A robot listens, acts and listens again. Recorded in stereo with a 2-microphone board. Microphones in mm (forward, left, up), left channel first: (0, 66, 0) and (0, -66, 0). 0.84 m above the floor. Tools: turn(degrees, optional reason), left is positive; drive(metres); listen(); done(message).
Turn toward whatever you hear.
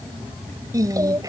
turn(degrees=-25, reason="The singing: about 25° right or 155° right.")
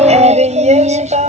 turn(degrees=-120, reason="So it is at 120° right.")
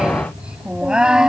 done("Facing the singing.")